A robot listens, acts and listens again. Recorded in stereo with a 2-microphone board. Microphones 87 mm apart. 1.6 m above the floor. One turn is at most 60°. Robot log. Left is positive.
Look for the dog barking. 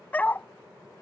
note: The dog barking: about 20° left or 160° left.
cmd yaw +20
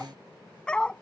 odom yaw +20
cmd yaw +30
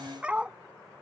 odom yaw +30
note: So it is at 10° right.
cmd yaw -10
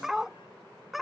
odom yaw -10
end: Found it: a dog barking, straight ahead.